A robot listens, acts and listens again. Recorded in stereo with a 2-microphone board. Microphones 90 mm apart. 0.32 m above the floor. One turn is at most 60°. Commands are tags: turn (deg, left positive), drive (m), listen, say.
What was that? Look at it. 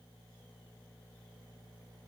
<listen/>
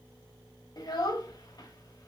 <turn deg="50"/>
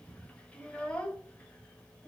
<turn deg="15"/>
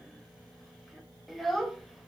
<say>Found it: a child speaking, straight ahead, under 1 m away.</say>